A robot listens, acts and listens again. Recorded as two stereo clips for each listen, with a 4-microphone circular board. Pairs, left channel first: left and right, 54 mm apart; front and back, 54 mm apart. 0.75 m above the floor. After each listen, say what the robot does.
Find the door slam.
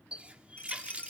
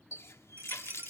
Keep listening.
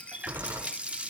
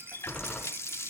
Turn 65° right.
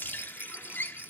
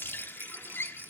Facing where the door slam came from. I can't hear it now.